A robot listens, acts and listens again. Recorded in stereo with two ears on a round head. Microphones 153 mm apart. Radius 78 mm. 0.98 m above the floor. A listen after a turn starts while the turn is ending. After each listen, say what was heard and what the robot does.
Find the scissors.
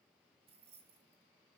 Keep listening.
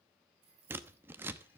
Turn 30° right.
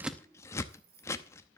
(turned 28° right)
So it is at 15° left. Turn 15° left.
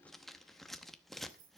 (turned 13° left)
Found it: scissors, straight ahead.